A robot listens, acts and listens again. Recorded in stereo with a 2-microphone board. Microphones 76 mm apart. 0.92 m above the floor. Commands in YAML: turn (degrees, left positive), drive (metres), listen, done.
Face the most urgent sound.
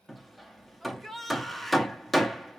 turn: 30
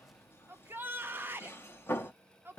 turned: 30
turn: -30
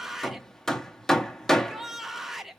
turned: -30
done: "Found it: a shout, straight ahead."